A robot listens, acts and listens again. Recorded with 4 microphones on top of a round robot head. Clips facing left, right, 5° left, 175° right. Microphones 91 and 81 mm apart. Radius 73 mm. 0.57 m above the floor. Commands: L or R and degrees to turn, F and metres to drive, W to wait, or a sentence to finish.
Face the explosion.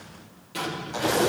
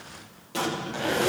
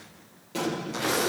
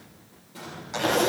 R35
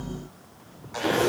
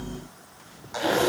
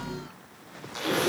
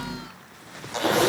I heard an explosion from this way, but can't make it out now.